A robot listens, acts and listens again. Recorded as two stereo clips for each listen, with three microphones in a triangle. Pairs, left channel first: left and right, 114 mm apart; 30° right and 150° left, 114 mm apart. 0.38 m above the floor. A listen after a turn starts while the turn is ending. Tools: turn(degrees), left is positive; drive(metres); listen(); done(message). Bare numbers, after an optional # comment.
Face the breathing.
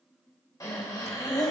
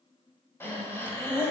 # The breathing: 35° left.
turn(35)
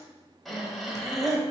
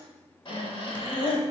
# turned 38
done("Facing the breathing, 1 to 2 m away.")